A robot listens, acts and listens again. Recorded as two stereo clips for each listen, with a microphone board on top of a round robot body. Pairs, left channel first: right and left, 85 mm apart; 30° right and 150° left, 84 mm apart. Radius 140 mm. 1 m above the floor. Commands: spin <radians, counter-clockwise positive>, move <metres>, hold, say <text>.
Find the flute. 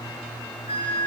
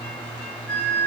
spin -1.83
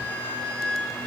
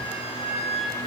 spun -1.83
spin -0.26
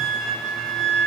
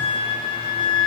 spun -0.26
say Found it: a flute, straight ahead, 2 to 4 m away.